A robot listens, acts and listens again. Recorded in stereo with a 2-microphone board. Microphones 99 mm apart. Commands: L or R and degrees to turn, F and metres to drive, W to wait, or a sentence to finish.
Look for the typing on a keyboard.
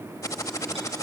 L30
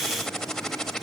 Found it: typing on a keyboard, straight ahead.